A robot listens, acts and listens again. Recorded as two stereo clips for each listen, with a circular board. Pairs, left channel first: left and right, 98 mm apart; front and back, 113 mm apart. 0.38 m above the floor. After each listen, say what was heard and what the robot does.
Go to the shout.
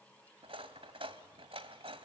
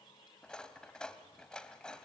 Keep listening.
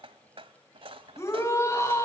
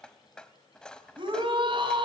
The shout: 145° left. Turn 145° left.
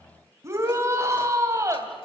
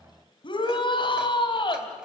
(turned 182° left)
The shout is now 35° right. Turn 35° right.
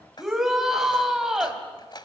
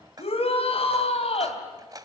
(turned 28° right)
Drive 1.0 m forward.
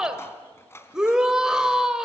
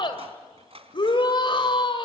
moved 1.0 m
The shout is now 10° right. Turn 10° right.
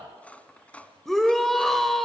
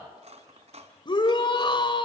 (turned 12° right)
Drive 1.0 m forward.
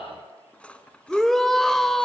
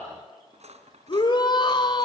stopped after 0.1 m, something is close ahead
Arrived at the shout, straight ahead.